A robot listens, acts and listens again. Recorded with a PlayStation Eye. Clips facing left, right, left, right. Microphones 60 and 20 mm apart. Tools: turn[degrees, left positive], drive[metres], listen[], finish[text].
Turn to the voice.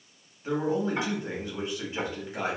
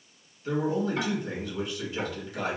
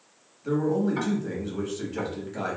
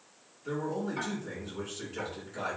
Thought: The man speaking: about 30° left or 150° left.
Action: turn[30]
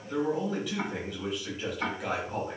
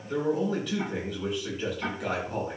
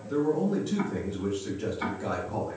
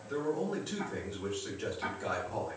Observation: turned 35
Action: finish[Facing the man speaking.]